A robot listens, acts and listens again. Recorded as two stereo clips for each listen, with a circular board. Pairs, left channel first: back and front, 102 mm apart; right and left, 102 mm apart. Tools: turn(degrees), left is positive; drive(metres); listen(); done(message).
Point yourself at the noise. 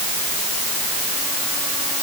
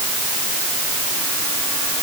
listen()
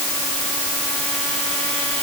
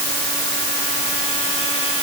listen()
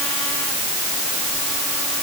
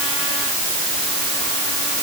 done("I can't make out anything to turn to.")